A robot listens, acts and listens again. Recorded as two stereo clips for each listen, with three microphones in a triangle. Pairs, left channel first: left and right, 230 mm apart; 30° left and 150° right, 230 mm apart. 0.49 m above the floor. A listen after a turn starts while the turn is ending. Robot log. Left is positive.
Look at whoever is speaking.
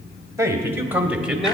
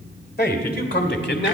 end: Found it: a man speaking, straight ahead, 1 to 2 m away.